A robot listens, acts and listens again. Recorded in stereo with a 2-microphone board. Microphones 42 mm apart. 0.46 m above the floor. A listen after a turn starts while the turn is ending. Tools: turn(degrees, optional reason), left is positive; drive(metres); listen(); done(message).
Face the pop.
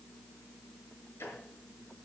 listen()
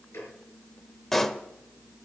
turn(degrees=30)
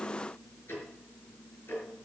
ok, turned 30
listen()
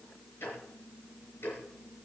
done("I heard a pop, but can't make it out now. It was about 25° right or 145° left.")